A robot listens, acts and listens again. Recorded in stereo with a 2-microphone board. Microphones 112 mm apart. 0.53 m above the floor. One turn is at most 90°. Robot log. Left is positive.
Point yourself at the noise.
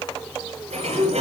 cmd yaw -90
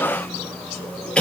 note: So it is at 10° left.
cmd yaw +10
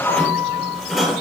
end: Found it: a sliding door, straight ahead, over 4 m away.